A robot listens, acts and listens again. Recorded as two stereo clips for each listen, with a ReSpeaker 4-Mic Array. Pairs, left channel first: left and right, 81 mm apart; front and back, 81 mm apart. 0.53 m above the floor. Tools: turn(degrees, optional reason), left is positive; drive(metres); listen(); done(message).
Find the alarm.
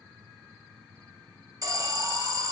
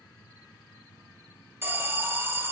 turn(degrees=-125, reason="The alarm: 125° right.")
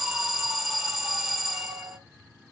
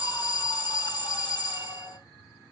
done("Facing the alarm.")